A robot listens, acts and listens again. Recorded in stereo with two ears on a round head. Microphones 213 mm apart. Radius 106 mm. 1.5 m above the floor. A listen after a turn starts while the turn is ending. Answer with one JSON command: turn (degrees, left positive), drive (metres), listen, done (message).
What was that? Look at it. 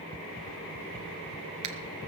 {"turn": -90}
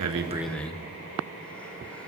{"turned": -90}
{"done": "Found it: breathing, straight ahead, 1 to 2 m away."}